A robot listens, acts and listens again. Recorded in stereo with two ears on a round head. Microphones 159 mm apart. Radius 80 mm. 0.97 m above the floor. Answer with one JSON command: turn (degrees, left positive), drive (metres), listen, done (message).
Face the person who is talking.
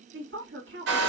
{"turn": -65}
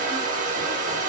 {"listen": true}
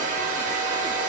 {"listen": true}
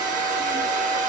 {"done": "I heard a woman speaking, but can't make it out now. It was about straight ahead or 50° right."}